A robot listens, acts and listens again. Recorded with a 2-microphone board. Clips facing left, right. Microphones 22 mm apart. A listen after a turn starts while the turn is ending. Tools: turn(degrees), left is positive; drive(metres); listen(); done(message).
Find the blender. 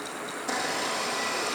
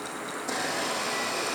turn(degrees=30)
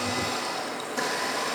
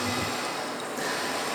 turn(degrees=145)
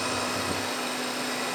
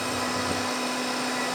turn(degrees=-30)
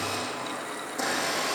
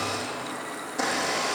turn(degrees=-15)
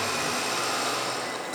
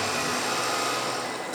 done("Facing the blender, over 4 m away.")